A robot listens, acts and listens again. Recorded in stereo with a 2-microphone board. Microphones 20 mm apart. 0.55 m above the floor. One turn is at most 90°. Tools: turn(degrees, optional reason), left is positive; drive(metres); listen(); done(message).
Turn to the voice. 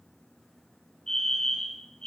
listen()
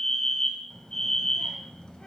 turn(degrees=45, reason="The child speaking: about 45° left or 135° left.")
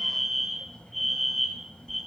turn(degrees=90, reason="So it is at 90° left.")
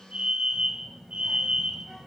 done("Found it: a child speaking, straight ahead, 1 to 2 m away.")